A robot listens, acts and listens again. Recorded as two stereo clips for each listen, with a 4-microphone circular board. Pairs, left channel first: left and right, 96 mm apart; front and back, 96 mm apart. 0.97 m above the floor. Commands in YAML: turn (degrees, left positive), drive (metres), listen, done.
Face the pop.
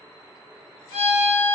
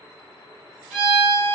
listen: true
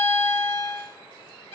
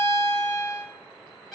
listen: true
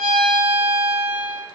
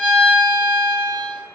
done: "I can't make out a pop to turn to."